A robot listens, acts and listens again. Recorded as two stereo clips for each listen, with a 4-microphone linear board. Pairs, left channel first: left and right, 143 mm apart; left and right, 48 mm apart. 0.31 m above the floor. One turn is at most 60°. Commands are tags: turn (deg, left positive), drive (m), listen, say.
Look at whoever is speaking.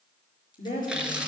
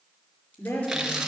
<turn deg="60"/>
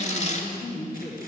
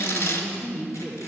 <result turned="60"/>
<turn deg="45"/>
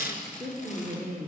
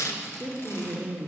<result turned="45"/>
<turn deg="10"/>
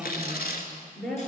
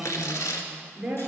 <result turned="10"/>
<say>Facing the woman speaking.</say>